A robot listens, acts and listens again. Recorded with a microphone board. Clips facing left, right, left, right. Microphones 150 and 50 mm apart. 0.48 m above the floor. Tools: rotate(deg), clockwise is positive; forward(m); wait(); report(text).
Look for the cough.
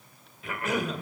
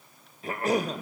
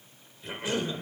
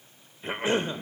rotate(40)
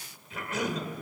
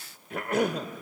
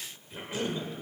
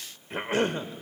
rotate(95)
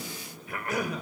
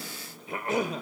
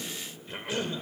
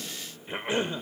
rotate(30)
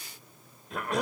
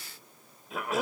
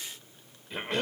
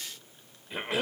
report("Facing the cough.")